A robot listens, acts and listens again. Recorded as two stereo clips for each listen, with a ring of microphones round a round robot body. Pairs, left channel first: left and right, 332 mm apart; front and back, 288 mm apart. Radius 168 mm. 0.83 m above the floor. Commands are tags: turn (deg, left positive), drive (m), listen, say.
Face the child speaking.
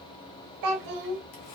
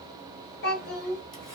<turn deg="-60"/>
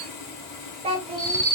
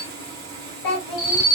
<turn deg="-15"/>
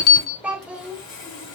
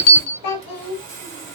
<say>Facing the child speaking.</say>